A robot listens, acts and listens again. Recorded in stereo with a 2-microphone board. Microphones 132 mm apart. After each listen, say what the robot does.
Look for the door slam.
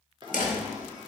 Turn 90° left.
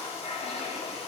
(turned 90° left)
I heard a door slam from this way, but can't make it out now.